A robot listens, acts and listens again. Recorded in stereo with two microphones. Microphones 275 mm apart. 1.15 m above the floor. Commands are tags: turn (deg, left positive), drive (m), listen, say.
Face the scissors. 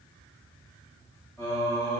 <listen/>
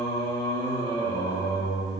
<listen/>
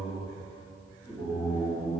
<say>I can't make out scissors, only singing.</say>